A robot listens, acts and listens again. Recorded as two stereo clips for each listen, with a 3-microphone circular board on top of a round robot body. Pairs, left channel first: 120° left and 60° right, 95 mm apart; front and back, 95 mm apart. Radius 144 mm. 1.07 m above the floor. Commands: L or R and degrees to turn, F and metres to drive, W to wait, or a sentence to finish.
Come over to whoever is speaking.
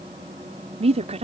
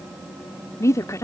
R60
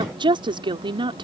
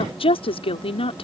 R25
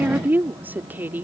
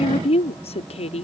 L10
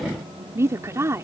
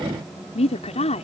F1.0
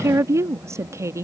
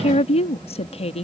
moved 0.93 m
F1.0
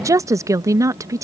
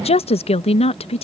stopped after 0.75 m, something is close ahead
I am next to the woman speaking.